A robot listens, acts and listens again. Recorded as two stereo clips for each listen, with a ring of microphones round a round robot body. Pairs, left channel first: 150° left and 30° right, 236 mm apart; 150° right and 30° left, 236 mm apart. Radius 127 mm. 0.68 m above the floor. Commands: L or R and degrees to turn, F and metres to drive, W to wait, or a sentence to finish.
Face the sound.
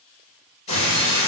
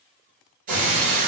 L85
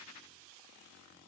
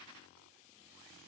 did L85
I heard breaking glass from this way, but can't make it out now.